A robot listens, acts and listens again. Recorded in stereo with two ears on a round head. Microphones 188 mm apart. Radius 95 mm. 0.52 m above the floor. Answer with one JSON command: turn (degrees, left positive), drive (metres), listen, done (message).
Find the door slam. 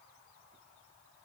{"listen": true}
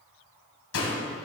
{"turn": 75}
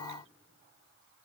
{"listen": true}
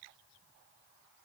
{"done": "I heard a door slam, but can't make it out now. It was about straight ahead or 30° left."}